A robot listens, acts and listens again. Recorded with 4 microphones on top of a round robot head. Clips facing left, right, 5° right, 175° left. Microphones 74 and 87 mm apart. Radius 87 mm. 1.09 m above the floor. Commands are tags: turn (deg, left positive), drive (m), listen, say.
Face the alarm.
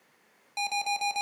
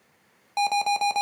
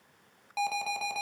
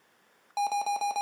<turn deg="-125"/>
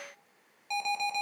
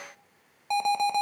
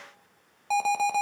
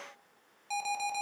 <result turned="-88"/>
<turn deg="-40"/>
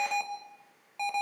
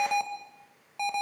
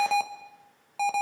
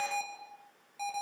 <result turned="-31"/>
<say>Facing the alarm.</say>